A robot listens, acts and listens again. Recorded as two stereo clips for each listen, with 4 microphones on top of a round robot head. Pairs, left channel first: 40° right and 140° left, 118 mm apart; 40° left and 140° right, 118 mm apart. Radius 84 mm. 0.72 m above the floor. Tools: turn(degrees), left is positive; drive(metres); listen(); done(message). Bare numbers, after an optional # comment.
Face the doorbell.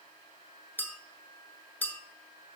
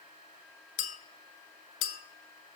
listen()
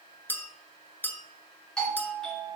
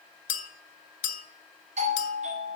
# The doorbell: 125° right.
turn(-125)
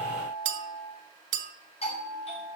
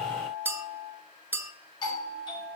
# The doorbell is now 10° right.
turn(-10)
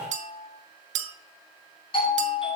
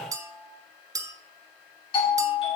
done("Facing the doorbell.")